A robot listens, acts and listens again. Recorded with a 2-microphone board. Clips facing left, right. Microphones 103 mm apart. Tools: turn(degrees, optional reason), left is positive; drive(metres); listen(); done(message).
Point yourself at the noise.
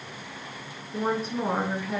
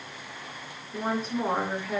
turn(degrees=30)
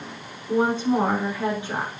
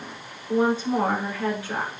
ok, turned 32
turn(degrees=160, reason="So it is at 160° left.")
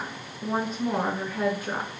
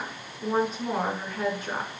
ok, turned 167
done("Facing the woman speaking.")